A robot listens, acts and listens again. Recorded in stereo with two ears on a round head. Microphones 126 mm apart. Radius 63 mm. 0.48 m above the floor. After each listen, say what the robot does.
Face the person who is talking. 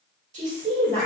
Turn 55° right.
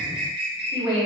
Turn 25° right.
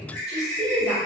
Facing the woman speaking, 1 to 2 m away.